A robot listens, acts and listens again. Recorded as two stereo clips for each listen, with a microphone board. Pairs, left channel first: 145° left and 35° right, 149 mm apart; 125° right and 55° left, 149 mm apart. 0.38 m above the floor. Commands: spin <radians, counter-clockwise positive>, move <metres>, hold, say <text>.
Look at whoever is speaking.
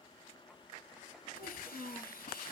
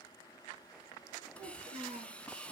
spin 0.17
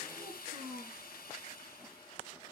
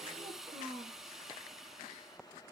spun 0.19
say Facing the child speaking, 2 to 4 m away.